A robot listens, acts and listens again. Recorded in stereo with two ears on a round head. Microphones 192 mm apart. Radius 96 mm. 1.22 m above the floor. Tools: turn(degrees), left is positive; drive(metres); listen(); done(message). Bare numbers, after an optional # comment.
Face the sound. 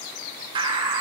# The bird: about 25° right or 155° right.
turn(-25)
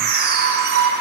# So it is at 130° right.
turn(-130)
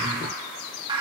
# The bird is now 20° right.
turn(-20)
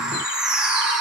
done("Facing the bird.")